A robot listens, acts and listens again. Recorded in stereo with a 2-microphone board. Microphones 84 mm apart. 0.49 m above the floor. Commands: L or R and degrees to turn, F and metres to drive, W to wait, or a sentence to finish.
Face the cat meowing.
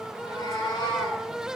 L75
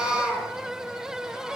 L30
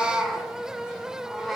Facing the cat meowing.